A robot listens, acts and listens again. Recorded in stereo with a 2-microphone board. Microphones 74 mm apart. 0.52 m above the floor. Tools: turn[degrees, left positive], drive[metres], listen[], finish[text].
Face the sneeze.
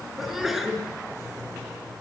Action: turn[-30]
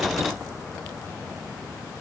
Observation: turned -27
Action: listen[]
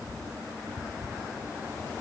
Action: finish[I heard a sneeze, but can't make it out now. It was about 25° left or 150° right.]